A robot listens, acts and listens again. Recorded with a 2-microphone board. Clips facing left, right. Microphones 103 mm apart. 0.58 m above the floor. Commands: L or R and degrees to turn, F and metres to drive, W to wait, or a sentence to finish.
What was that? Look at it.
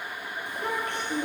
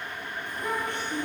L90
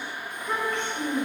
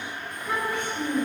R15
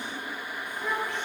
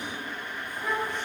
R10
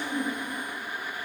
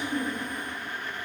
R10
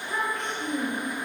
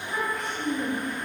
R10
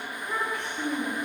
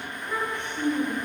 Found it: a child speaking, straight ahead.